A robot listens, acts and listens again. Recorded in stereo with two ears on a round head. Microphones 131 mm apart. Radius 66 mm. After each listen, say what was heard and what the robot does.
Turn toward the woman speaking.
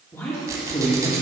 The woman speaking: about 25° left or 155° left. Turn 25° left.
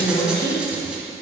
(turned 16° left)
The woman speaking: about 50° left or 130° left. Turn 50° left.
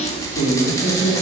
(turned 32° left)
So it is at 100° left. Turn 100° left.
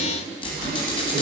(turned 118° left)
Nothing new. It was at 15° right. Turn 15° right.
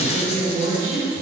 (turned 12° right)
The woman speaking is now 35° right. Turn 35° right.
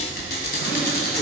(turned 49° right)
Nothing new. It was at 10° left. Turn 10° left.
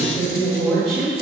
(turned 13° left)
Found it: a woman speaking, straight ahead, 2 to 4 m away.